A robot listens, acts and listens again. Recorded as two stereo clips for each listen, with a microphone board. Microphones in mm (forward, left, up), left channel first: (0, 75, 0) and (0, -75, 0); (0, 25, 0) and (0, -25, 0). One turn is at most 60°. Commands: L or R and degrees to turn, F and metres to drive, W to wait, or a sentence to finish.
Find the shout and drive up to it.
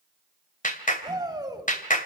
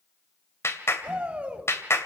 R25
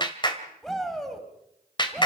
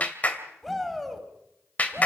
F1.0
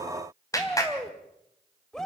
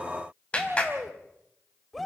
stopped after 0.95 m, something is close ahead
Something is in my way. I am facing the shout but have not reached it.